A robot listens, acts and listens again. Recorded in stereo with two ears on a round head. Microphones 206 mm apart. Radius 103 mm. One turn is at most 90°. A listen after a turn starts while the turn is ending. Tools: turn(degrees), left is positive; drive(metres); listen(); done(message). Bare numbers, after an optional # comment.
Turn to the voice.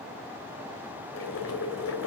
listen()
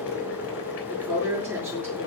turn(-30)
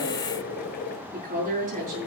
# So it is at 145° right.
turn(-90)
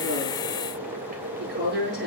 # The woman speaking is now 50° right.
turn(-50)
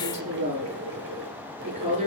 # The woman speaking is now 35° right.
turn(-35)
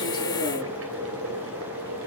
listen()
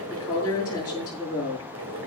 # The woman speaking is now 15° left.
turn(15)
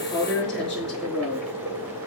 done("Found it: a woman speaking, straight ahead, over 4 m away.")